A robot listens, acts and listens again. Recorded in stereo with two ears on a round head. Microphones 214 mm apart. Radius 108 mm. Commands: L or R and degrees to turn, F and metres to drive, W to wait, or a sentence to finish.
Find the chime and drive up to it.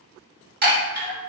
R45
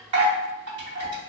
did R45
R90
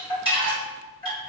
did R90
L20
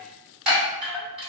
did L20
F1.0
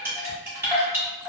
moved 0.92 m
R10
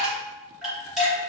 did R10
F1.0
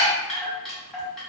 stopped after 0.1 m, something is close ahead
I am next to the chime.